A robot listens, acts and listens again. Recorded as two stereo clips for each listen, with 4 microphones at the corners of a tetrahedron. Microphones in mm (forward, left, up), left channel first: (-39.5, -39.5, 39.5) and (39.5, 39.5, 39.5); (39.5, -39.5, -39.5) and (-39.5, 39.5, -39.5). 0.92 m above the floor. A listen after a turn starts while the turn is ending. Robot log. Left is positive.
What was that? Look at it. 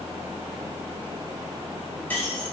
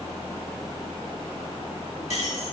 note: The keys jangling: 60° right.
cmd yaw -60
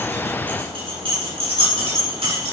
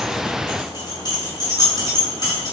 note: The keys jangling is now 10° left.
cmd yaw +10
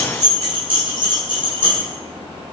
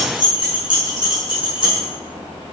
end: Facing the keys jangling.